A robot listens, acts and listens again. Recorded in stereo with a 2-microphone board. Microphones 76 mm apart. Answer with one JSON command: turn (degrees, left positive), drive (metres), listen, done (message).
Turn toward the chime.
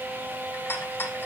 {"listen": true}
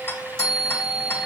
{"turn": 30}
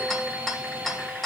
{"listen": true}
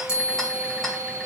{"turn": 140}
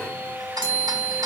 {"turn": 20}
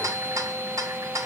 {"listen": true}
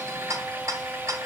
{"listen": true}
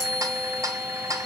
{"done": "Facing the chime, 2 to 4 m away."}